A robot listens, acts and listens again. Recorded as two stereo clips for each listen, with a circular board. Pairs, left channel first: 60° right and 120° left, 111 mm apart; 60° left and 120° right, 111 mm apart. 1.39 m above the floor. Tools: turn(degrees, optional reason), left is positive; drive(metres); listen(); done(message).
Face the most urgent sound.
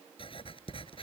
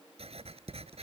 listen()
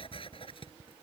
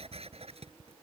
listen()
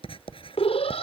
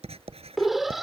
turn(degrees=-30, reason="The alarm: 30° right.")
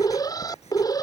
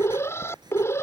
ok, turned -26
done("Facing the alarm.")